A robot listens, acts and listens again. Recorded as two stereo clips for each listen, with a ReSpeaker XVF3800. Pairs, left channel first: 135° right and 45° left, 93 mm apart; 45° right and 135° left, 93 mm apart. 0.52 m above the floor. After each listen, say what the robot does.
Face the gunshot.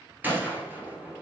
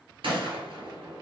Turn 115° left.
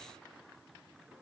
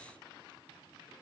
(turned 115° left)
Facing where the gunshot came from. I can't hear it now.